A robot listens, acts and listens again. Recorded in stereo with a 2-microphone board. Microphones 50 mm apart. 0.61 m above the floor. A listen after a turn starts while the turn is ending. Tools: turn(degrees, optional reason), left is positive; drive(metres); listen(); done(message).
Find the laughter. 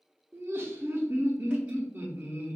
turn(degrees=-50, reason="The laughter: about 50° right or 130° right.")
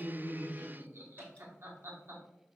turn(degrees=-70, reason="So it is at 70° right.")
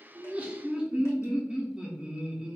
turn(degrees=-25, reason="The laughter is now 25° right.")
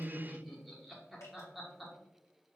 done("Found it: laughter, straight ahead, 1 to 2 m away.")